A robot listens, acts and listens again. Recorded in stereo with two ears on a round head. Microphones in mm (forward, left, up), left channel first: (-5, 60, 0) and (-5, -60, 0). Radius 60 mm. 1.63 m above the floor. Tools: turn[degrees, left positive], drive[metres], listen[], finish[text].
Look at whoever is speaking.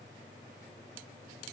Action: listen[]
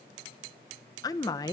Thought: The woman speaking: about 30° left or 150° left.
Action: turn[30]
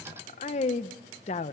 Thought: So it is at 120° left.
Action: turn[120]
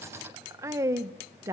Thought: The woman speaking is now 25° right.
Action: turn[-25]
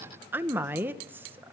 Thought: The woman speaking is now 15° right.
Action: turn[-15]
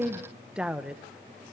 Action: finish[Facing the woman speaking.]